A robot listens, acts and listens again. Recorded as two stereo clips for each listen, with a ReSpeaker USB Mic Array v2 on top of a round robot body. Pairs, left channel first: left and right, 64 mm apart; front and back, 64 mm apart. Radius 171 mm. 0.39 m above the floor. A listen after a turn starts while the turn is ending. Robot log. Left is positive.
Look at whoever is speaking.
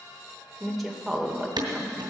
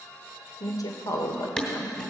end: Found it: a woman speaking, straight ahead.